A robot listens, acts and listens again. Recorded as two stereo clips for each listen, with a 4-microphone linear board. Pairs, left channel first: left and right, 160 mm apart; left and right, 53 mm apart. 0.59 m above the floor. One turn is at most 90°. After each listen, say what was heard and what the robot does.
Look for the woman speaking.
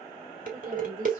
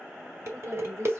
The woman speaking: about 60° right or 120° right. Turn 60° right.
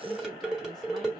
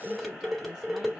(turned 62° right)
Keep listening.
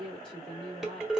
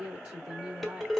So it is at 35° right. Turn 35° right.
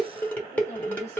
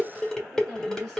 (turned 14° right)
The woman speaking is now 20° right. Turn 20° right.
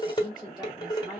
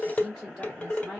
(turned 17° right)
Facing the woman speaking, 2 to 4 m away.